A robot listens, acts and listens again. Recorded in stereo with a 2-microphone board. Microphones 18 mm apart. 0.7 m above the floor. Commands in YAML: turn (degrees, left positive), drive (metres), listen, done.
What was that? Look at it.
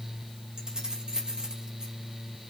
turn: -50
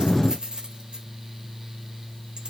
turn: -80
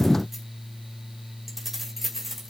turn: -10
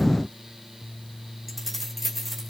done: "Facing the keys jangling."